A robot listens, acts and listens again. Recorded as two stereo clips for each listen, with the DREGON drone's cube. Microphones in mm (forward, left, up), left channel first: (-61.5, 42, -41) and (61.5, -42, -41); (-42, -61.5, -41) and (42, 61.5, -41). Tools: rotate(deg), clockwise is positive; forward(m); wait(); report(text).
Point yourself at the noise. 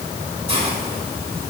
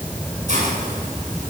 rotate(-15)
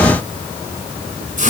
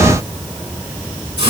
report("Found it: a hiss, straight ahead.")